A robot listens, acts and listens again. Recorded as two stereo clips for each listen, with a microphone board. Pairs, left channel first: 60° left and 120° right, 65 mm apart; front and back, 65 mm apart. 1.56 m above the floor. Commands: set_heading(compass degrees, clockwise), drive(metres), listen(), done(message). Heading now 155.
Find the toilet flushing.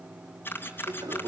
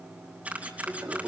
set_heading(280)
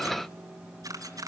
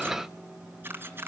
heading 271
set_heading(281)
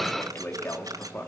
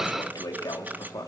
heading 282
done("Facing the toilet flushing.")